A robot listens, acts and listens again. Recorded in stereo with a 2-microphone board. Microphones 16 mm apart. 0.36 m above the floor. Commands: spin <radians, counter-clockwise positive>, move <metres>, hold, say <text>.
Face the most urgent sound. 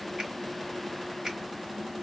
hold
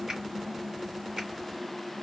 hold
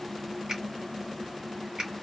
say I can't make out anything urgent, only a finger snap.